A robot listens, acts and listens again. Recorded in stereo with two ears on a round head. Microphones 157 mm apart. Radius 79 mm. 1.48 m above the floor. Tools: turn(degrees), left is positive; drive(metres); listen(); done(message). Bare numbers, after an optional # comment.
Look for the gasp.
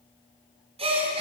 # The gasp: about 35° right or 145° right.
turn(-35)
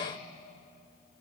listen()
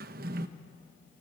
done("I heard a gasp, but can't make it out now. It was about straight ahead or 110° right.")